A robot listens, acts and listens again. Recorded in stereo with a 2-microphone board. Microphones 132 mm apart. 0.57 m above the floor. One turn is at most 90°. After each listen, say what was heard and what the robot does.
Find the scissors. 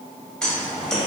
Turn 30° left.
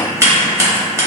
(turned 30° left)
So it is at 25° right. Turn 25° right.
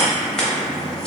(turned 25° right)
Facing the scissors, under 1 m away.